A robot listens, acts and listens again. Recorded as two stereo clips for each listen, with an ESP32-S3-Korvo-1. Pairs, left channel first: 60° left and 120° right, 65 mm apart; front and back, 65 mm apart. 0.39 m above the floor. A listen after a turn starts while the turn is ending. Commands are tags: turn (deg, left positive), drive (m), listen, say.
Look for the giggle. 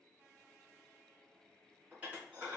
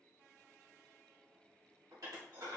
<listen/>
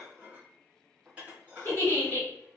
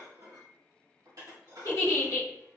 <say>Facing the giggle, 1 to 2 m away.</say>